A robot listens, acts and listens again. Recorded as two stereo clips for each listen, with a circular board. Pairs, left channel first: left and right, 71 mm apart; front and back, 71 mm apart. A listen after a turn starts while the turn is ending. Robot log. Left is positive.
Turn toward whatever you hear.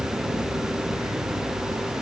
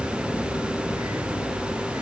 cmd idle
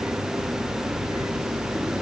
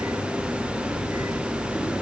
cmd idle
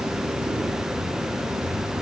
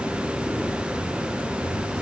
end: I can't make out anything to turn to.